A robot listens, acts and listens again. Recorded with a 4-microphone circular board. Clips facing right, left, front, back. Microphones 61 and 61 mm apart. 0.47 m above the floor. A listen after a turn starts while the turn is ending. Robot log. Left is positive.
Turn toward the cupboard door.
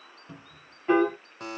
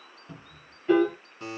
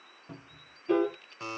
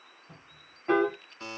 note: The cupboard door: 10° right.
cmd yaw -10
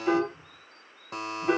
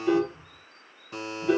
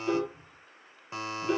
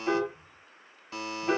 end: Facing the cupboard door, 1 to 2 m away.